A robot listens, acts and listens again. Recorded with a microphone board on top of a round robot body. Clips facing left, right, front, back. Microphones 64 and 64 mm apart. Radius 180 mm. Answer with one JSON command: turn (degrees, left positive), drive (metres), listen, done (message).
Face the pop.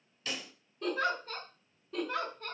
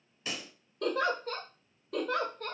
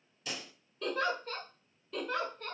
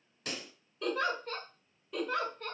{"turn": -155}
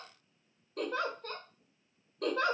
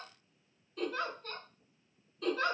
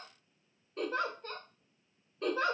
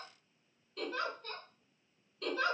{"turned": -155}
{"done": "Facing where the pop came from. I can't hear it now."}